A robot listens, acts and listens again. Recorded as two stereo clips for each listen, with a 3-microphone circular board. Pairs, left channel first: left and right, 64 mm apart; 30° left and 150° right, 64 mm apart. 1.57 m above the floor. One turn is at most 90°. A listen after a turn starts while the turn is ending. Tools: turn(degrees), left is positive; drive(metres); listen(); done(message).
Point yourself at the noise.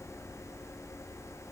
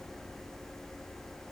listen()
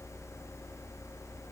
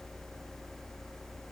listen()
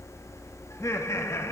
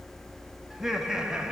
turn(degrees=90)
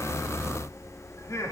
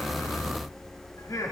turn(degrees=55)
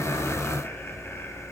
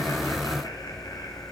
listen()
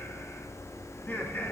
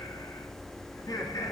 turn(degrees=30)
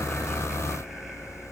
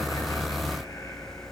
listen()
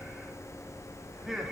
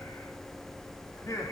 done("Facing the laughter.")